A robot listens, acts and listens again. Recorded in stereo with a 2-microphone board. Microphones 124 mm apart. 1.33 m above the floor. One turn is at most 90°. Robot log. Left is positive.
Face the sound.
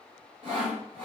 note: The sawing: about 65° right or 115° right.
cmd yaw -65
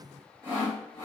note: So it is at 45° right.
cmd yaw -45
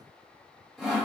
end: Found it: sawing, straight ahead.